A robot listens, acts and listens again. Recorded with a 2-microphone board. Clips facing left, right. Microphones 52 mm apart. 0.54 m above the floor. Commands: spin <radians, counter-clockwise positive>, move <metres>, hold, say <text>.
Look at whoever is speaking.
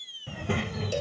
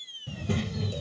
spin 0.52
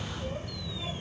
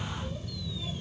spin 0.70
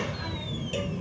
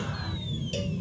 spin 2.18
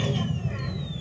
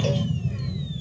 spin 0.96
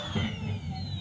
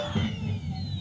spin 0.26
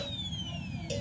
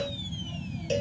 spin 0.17
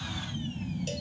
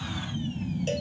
say Found it: a child speaking, straight ahead.